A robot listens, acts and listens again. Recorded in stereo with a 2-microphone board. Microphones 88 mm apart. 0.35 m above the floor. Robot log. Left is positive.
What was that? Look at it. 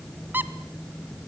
note: The squeak: about 20° right or 160° right.
cmd yaw -20
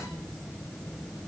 cmd idle
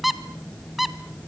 end: Facing the squeak.